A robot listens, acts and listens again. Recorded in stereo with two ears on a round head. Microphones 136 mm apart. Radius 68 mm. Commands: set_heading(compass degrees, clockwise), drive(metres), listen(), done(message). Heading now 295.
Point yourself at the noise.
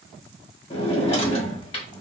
set_heading(255)
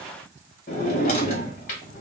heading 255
set_heading(165)
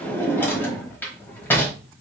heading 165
set_heading(150)
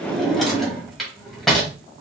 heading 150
done("Found it: a drawer, straight ahead, 1 to 2 m away.")